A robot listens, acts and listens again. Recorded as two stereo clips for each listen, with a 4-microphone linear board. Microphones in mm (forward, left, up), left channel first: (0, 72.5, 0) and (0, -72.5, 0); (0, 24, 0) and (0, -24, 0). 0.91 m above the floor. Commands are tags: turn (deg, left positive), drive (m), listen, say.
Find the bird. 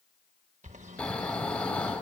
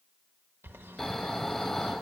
<turn deg="-55"/>
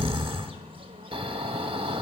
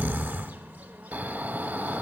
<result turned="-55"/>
<turn deg="-45"/>
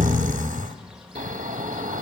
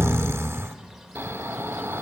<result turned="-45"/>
<say>Found it: a bird, straight ahead, 1 to 2 m away.</say>